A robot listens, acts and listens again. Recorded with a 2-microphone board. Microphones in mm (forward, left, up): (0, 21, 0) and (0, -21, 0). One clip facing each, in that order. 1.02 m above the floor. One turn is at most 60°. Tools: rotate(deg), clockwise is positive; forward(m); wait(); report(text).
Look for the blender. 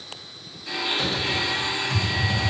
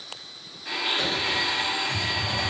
rotate(40)
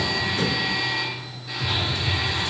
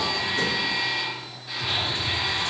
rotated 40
report("Found it: a blender, straight ahead.")